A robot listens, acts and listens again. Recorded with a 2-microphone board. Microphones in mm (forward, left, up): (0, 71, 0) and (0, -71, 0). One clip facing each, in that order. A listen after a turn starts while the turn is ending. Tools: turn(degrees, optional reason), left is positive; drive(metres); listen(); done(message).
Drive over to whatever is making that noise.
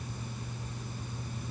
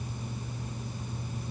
listen()
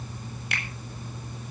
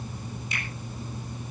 turn(degrees=70, reason="The finger snap: about 70° left or 110° left.")
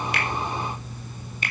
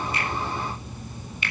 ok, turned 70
turn(degrees=40, reason="So it is at 40° left.")
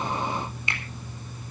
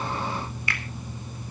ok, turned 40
turn(degrees=20, reason="The finger snap is now 20° left.")
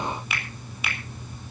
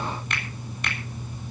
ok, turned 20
drive(metres=1.0)
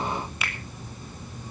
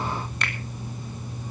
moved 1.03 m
drive(metres=1.0)
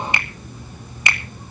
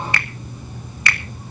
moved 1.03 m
turn(degrees=20, reason="The finger snap is now 20° left.")
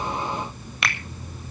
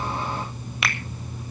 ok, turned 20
drive(metres=1.0)
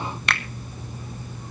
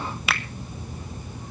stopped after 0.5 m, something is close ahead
done("Arrived at the finger snap, straight ahead.")